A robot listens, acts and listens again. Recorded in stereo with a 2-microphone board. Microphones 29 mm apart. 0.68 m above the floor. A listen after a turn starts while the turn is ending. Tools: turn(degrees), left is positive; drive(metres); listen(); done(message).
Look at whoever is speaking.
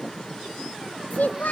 turn(degrees=90)
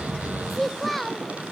turn(degrees=10)
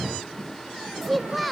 done("Found it: a child speaking, straight ahead, 1 to 2 m away.")